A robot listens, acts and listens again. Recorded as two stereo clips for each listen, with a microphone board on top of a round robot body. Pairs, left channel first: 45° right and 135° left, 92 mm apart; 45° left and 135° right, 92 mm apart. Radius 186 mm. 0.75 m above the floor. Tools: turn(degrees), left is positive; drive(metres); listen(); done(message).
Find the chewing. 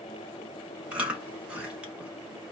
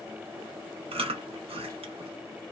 turn(degrees=-145)
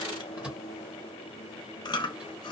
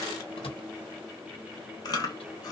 done("Found it: chewing, straight ahead.")